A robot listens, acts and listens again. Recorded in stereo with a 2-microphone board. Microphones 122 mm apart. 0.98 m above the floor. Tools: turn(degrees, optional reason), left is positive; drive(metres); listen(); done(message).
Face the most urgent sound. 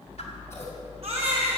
turn(degrees=-65, reason="The baby crying: about 65° right or 115° right.")
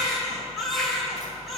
done("Facing the baby crying.")